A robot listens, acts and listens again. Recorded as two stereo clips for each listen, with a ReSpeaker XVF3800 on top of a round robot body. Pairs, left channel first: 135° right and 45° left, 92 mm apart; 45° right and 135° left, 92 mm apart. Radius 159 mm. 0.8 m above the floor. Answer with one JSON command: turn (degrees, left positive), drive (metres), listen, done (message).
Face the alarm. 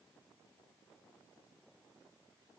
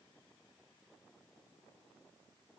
{"listen": true}
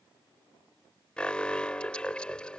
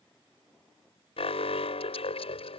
{"turn": -55}
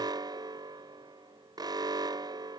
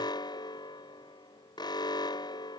{"done": "Facing the alarm."}